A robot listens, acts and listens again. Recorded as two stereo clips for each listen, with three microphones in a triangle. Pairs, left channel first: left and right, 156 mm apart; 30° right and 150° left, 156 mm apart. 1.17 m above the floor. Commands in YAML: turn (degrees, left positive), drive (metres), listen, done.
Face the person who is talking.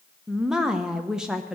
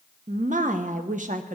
turn: -175
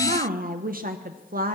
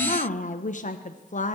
turn: -65
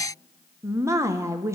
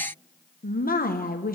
turn: -15
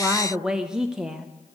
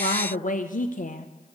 done: "Found it: a woman speaking, straight ahead, under 1 m away."